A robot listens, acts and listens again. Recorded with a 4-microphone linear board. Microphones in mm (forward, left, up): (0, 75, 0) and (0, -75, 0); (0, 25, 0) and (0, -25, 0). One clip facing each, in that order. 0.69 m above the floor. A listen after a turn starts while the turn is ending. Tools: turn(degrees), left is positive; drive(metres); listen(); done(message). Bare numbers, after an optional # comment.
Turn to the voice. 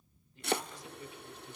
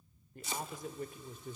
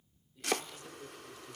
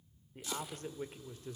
# The man speaking: about 55° right or 125° right.
turn(-55)
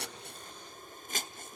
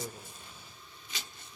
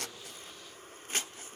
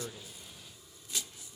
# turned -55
done("Facing the man speaking, 1 to 2 m away.")